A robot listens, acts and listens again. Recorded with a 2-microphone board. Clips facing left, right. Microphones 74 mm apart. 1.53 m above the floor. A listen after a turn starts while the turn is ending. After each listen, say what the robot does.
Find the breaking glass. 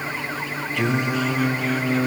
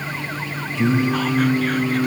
Keep listening.
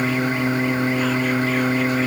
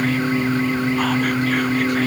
Keep listening.
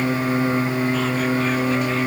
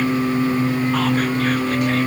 I can't make out breaking glass, only singing.